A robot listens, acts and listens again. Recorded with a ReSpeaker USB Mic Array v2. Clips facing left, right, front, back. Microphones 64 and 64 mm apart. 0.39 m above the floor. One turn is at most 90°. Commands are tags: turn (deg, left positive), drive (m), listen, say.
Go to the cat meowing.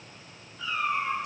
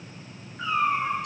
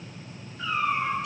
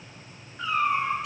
<turn deg="-90"/>
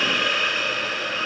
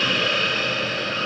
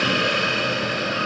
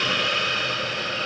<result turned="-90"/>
<turn deg="-55"/>
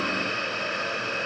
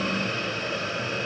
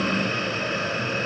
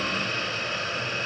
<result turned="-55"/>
<listen/>
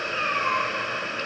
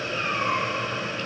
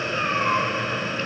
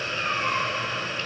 <drive m="1.0"/>
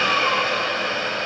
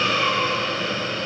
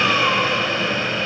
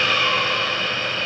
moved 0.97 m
<listen/>
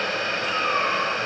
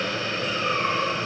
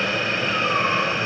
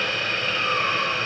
<listen/>
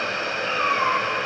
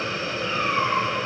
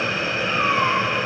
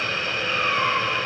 <drive m="1.0"/>
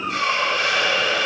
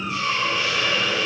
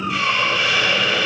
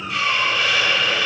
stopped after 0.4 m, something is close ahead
<turn deg="10"/>
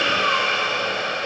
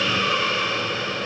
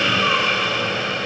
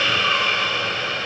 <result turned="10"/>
<listen/>
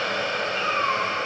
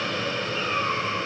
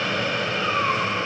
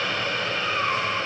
<say>Something is in my way. I am facing the cat meowing but have not reached it.</say>